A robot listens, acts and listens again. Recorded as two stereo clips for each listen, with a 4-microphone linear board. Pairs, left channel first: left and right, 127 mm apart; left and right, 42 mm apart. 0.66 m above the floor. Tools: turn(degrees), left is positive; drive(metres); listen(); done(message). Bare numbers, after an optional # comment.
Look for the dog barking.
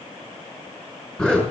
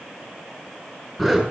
listen()
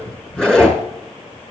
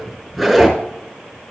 listen()
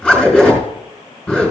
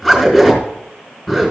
done("I can't make out a dog barking to turn to.")